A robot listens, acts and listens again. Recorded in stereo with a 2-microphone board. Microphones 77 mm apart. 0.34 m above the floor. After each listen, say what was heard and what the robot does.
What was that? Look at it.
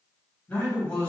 The man speaking: about 25° left or 155° left. Turn 25° left.
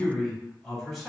Found it: a man speaking, straight ahead.